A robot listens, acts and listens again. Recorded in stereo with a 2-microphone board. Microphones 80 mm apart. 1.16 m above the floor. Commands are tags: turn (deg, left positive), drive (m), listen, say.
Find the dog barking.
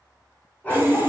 <turn deg="20"/>
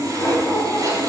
<turn deg="20"/>
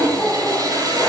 <turn deg="25"/>
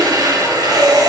<listen/>
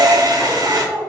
<turn deg="15"/>
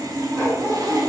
<turn deg="25"/>
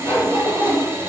<turn deg="135"/>
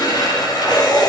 <listen/>
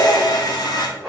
<say>Facing the dog barking.</say>